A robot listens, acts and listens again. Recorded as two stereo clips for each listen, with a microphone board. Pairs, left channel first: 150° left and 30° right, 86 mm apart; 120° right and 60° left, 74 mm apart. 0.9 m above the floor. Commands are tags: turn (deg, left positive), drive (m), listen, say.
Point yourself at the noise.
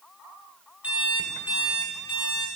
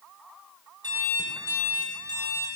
<turn deg="45"/>
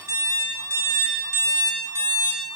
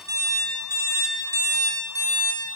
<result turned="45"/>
<turn deg="20"/>
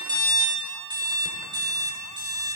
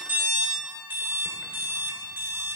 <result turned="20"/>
<say>Found it: an alarm clock, straight ahead.</say>